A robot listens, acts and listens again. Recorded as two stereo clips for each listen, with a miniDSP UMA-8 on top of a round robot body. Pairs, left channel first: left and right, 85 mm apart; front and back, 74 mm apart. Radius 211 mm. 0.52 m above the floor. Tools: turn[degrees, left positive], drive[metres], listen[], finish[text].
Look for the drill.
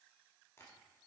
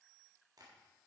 Action: listen[]
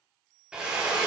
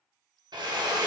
Thought: The drill: 170° right.
Action: turn[-170]
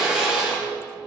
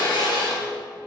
Action: finish[Found it: a drill, straight ahead.]